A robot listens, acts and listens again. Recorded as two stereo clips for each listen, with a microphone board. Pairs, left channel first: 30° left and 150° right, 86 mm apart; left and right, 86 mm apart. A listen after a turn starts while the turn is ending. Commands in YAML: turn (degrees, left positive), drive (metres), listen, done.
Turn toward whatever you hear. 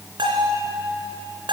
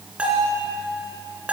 turn: -165
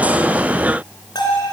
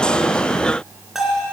done: "Found it: a bell, straight ahead."